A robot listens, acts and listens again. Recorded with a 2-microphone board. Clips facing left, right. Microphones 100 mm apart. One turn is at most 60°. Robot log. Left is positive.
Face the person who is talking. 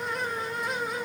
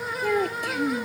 note: The child speaking: about 75° right or 105° right.
cmd yaw -60
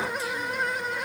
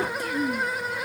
note: So it is at 50° right.
cmd yaw -50
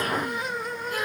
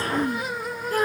note: The child speaking is now 35° right.
cmd yaw -35
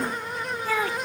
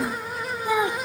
note: The child speaking is now 15° right.
cmd yaw -15
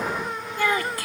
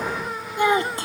note: The child speaking is now 25° right.
cmd yaw -25
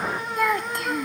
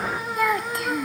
end: Found it: a child speaking, straight ahead.